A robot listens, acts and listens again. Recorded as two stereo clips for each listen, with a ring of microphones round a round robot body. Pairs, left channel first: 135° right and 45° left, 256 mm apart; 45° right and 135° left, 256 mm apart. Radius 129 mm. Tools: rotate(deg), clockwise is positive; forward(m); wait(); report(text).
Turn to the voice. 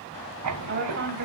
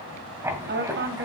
rotate(-90)
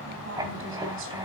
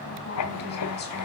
wait()
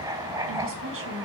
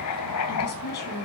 report("Found it: a woman speaking, straight ahead, over 4 m away.")